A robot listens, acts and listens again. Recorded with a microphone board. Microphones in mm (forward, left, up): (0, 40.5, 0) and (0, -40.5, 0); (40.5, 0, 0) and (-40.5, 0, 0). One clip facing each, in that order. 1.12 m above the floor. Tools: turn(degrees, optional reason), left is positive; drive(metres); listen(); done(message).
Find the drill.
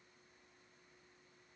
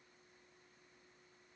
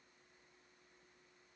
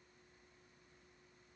listen()
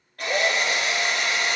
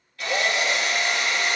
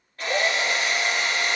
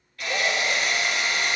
turn(degrees=50, reason="The drill: 50° left.")
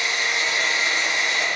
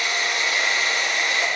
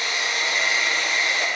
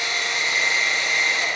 turn(degrees=30, reason="The drill is now 30° left.")
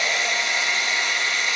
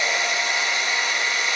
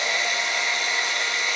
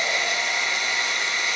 done("Found it: a drill, straight ahead, 2 to 4 m away.")